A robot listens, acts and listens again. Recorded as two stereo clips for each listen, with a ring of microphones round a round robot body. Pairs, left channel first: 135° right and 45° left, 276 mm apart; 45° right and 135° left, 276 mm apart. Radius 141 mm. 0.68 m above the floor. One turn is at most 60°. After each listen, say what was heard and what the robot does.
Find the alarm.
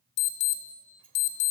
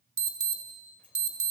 The alarm: 160° right. Turn 60° right.
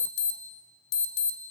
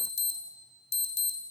The alarm is now 110° right. Turn 60° right.
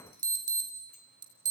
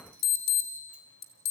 The alarm is now 30° right. Turn 30° right.
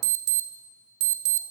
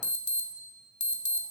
The alarm is now 15° left. Turn 15° left.
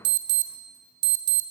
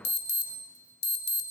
Facing the alarm, 2 to 4 m away.